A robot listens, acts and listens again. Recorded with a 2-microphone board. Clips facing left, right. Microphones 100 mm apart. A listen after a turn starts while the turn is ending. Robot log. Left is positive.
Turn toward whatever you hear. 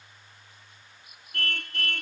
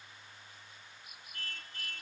cmd yaw +90
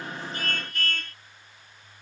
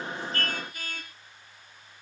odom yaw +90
note: So it is at 10° right.
cmd yaw -10
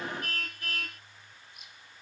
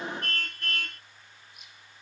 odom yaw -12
end: Found it: a car horn, straight ahead.